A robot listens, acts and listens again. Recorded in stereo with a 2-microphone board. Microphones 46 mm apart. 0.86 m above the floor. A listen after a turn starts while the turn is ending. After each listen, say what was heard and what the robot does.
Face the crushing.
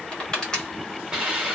The crushing: about 20° left or 160° left. Turn 20° left.
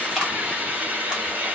Keep listening.
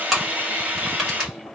Found it: crushing, straight ahead, 1 to 2 m away.